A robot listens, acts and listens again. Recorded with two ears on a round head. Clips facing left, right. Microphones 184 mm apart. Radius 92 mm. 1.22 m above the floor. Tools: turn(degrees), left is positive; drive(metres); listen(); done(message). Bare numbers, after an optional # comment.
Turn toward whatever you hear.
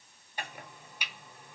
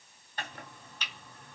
turn(30)
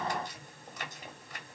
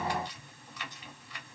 # So it is at 140° left.
turn(140)
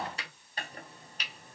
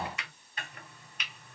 # The chopping is now 30° left.
turn(30)
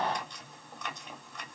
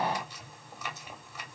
done("Facing the chopping.")